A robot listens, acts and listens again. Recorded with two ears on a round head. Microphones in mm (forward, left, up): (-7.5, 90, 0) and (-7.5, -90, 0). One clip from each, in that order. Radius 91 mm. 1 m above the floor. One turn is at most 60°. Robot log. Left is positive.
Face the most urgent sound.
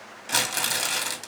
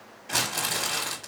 cmd idle
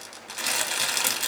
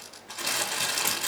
cmd idle
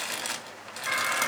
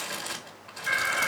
note: The alarm: about 30° left or 150° left.
cmd yaw +30
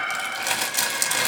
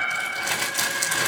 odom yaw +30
note: So it is at 120° left.
cmd yaw +60
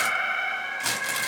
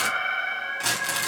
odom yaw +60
note: The alarm is now 70° left.
cmd yaw +60
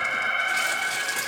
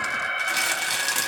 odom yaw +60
note: The alarm is now 30° left.
cmd yaw +30
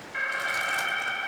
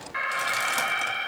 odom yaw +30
note: The alarm is now 20° right.
cmd yaw -20
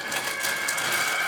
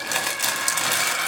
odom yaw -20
end: Found it: an alarm, straight ahead.